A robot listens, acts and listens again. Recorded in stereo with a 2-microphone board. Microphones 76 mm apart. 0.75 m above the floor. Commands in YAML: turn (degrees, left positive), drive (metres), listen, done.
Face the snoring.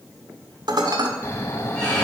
turn: 35
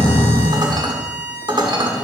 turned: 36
turn: 105
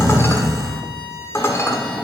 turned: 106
done: "Facing the snoring, 1 to 2 m away."